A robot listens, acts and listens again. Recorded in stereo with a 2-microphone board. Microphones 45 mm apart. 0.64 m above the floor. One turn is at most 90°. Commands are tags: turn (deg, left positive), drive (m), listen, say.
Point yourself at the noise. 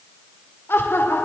<turn deg="60"/>
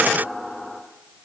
<say>Found it: laughter, straight ahead.</say>